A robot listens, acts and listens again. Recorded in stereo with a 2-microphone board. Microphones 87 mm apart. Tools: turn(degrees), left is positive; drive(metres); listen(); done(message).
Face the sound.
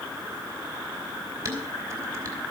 turn(degrees=-35)
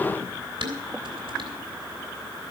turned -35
turn(degrees=-110)
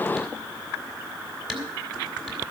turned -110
done("Found it: dishes clattering, straight ahead.")